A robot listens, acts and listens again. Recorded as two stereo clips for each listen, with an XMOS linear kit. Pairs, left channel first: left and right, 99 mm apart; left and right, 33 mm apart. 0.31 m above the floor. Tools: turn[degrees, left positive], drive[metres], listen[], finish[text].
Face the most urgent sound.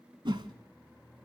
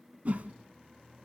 Action: listen[]
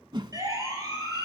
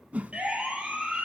Thought: The siren: about 35° right or 145° right.
Action: turn[-35]
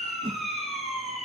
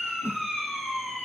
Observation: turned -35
Action: finish[Facing the siren.]